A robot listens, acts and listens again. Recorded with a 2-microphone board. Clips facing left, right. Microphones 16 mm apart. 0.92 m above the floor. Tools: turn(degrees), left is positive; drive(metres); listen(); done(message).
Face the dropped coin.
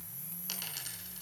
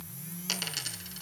turn(degrees=-25)
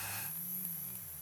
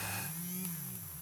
listen()
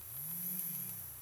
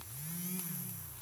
done("I heard a dropped coin, but can't make it out now. It was about straight ahead or 130° right.")